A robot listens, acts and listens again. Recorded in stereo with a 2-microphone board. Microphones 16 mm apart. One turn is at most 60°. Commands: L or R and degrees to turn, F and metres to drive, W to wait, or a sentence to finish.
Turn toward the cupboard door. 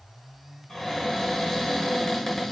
L40
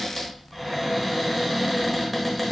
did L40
Found it: a cupboard door, straight ahead, 1 to 2 m away.